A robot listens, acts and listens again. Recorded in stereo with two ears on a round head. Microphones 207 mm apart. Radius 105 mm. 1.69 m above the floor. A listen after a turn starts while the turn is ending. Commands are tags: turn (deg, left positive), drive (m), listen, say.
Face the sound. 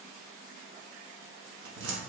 <turn deg="-55"/>
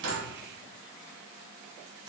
<listen/>
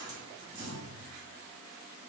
<turn deg="-20"/>
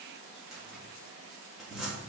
<say>Facing the cupboard door.</say>